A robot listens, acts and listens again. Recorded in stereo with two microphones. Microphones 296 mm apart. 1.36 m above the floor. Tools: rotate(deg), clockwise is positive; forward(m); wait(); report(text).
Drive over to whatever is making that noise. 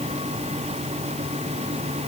wait()
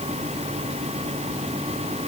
wait()
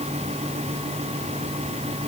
report("I can't make out anything to turn to.")